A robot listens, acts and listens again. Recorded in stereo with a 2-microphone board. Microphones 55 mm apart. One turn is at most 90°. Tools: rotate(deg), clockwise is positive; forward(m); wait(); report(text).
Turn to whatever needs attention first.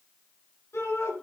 rotate(-60)
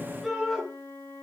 report("Found it: a shout, straight ahead, over 4 m away.")